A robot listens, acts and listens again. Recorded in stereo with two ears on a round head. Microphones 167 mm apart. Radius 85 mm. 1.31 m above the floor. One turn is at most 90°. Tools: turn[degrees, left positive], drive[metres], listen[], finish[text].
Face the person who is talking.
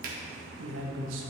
Action: turn[-90]
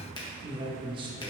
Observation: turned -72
Thought: So it is at 25° right.
Action: turn[-25]
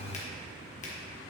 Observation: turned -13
Thought: Nothing new. It was at 10° right.
Action: turn[-10]
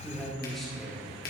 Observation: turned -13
Action: finish[Found it: a man speaking, straight ahead, 1 to 2 m away.]